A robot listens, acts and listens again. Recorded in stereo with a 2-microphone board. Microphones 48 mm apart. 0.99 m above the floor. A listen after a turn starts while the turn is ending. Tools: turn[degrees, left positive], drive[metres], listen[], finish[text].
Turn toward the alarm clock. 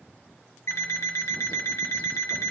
Thought: The alarm clock: about 65° left or 115° left.
Action: turn[65]
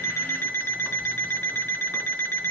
Thought: So it is at 50° left.
Action: turn[50]
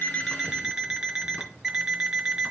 Thought: The alarm clock is now 15° right.
Action: turn[-15]
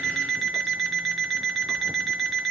Action: finish[Facing the alarm clock, 1 to 2 m away.]